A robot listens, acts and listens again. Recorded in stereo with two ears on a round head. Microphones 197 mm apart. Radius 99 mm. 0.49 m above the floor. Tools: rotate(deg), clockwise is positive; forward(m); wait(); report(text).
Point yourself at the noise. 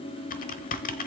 rotate(-40)
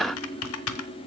rotate(-100)
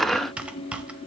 report("Facing the typing on a keyboard.")